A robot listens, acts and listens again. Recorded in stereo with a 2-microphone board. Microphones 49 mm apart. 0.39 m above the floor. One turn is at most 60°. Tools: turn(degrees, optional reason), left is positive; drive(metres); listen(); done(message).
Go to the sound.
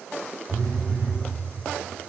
turn(degrees=-60)
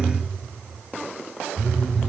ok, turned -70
turn(degrees=-25, reason="So it is at 25° right.")
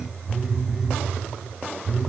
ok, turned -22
drive(metres=1.0)
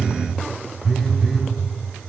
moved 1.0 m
drive(metres=1.0)
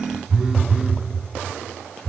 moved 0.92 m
turn(degrees=-10, reason="The phone buzzing is now 10° right.")
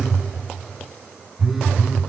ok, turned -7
drive(metres=1.0)
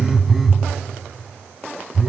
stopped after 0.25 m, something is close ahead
done("Arrived at the phone buzzing, straight ahead.")